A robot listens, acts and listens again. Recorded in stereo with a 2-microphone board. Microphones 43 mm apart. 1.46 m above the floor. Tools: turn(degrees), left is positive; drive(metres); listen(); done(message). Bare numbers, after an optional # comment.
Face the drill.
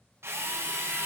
# The drill: about 75° right or 105° right.
turn(-75)
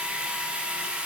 # So it is at 25° right.
turn(-25)
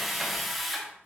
done("Found it: a drill, straight ahead, 1 to 2 m away.")